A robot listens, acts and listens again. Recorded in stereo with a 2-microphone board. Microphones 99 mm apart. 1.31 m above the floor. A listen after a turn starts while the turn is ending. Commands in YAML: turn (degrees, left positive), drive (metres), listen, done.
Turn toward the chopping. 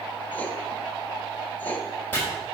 turn: 20
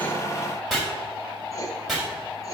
done: "Found it: chopping, straight ahead."